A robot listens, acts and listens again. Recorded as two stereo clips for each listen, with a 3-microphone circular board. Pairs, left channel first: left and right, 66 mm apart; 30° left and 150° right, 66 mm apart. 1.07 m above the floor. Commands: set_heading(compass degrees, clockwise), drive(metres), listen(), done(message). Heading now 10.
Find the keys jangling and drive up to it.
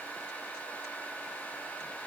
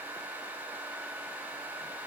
listen()
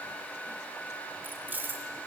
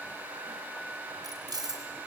set_heading(160)
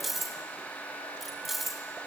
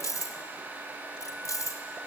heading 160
drive(1.0)
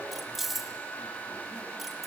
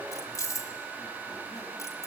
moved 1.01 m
drive(1.0)
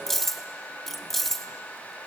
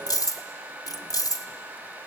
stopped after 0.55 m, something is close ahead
done("I am next to the keys jangling.")